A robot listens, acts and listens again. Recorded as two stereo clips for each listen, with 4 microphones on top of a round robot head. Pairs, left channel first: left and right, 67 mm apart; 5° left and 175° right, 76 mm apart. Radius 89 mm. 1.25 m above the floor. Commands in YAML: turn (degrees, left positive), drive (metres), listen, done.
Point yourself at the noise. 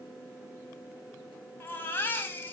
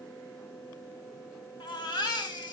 turn: 30
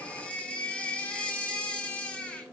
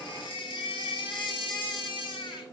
turn: 15
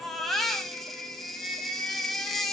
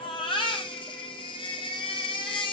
done: "Found it: a baby crying, straight ahead, 1 to 2 m away."